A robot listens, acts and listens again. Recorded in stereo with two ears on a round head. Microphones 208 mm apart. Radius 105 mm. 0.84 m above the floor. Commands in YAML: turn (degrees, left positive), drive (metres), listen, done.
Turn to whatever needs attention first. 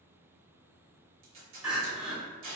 turn: -30
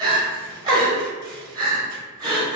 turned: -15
turn: -160
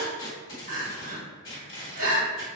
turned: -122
turn: -35
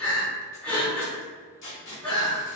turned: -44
done: "Found it: crying, straight ahead, under 1 m away."